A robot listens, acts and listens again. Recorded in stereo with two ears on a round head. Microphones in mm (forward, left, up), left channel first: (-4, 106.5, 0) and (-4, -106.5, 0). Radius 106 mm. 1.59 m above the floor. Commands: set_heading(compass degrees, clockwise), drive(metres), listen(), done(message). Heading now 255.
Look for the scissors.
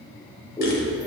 set_heading(230)
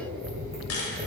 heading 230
done("Facing the scissors, 2 to 4 m away.")